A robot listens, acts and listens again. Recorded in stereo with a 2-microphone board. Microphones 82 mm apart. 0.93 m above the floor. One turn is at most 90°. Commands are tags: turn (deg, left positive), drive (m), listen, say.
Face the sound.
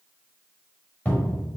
<turn deg="20"/>
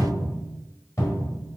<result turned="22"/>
<turn deg="90"/>
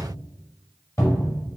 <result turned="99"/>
<turn deg="45"/>
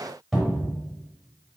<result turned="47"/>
<say>Found it: a cupboard door, straight ahead.</say>